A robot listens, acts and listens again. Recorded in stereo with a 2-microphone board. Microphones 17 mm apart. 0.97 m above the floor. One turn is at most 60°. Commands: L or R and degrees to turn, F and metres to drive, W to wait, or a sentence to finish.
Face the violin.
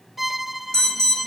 R30
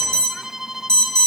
R60
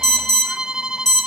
R60
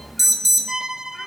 R45
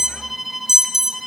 R10
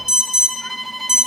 Facing the violin, 1 to 2 m away.